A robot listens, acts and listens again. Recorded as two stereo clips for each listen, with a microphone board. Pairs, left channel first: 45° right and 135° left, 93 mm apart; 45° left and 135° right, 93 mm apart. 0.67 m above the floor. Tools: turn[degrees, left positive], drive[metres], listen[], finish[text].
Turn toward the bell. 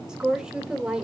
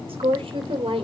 Action: listen[]
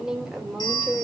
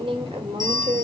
Thought: The bell: 90° right.
Action: turn[-90]
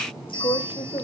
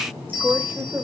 Thought: The bell is now 10° right.
Action: turn[-10]
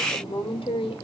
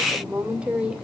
Action: listen[]
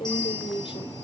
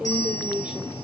Action: listen[]
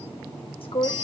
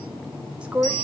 Action: finish[Facing the bell.]